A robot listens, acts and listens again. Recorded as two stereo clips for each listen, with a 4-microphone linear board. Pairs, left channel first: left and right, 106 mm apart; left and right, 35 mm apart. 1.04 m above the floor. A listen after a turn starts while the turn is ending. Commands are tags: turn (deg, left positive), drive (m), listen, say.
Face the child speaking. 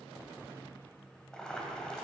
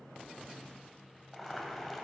<listen/>
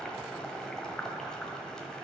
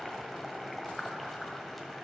<listen/>
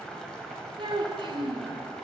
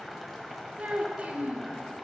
<turn deg="-50"/>
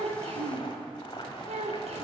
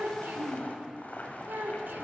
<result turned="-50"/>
<turn deg="-80"/>
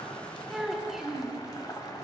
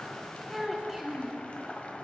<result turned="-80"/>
<say>Found it: a child speaking, straight ahead.</say>